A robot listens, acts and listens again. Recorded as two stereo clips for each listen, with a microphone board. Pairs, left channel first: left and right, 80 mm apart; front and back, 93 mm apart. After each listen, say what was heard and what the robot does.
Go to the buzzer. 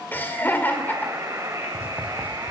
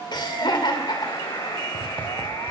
The buzzer: 40° right. Turn 40° right.
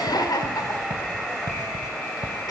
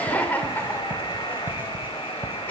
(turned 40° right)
Drive 1.0 m forward.
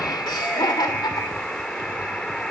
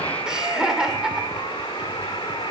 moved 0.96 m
The buzzer is now 10° left. Turn 10° left.
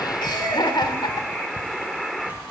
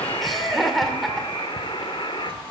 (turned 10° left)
Drive 1.0 m forward.
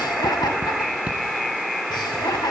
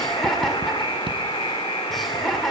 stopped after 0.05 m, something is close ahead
Arrived at the buzzer, straight ahead.